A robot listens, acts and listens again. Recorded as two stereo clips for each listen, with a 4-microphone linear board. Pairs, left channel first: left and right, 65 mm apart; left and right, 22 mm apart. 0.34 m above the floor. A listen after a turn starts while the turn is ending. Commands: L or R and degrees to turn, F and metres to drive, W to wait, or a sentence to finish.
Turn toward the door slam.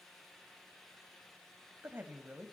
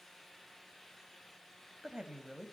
W
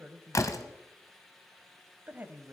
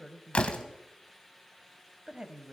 L55
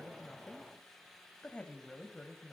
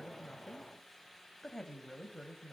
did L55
W
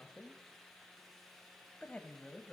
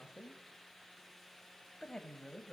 I heard a door slam, but can't make it out now. It was about straight ahead or 70° left.